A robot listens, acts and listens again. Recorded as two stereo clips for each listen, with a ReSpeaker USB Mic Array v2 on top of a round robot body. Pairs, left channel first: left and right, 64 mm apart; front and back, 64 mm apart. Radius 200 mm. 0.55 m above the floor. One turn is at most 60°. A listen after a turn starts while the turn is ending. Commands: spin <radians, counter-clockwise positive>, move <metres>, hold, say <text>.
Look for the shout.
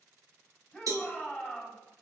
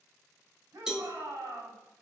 spin 1.05
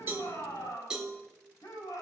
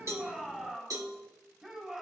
spin 1.05
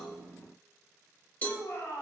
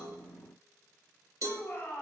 spin 0.96
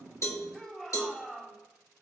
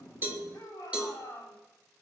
spin 0.17
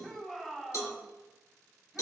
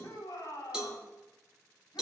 say Found it: a shout, straight ahead, over 4 m away.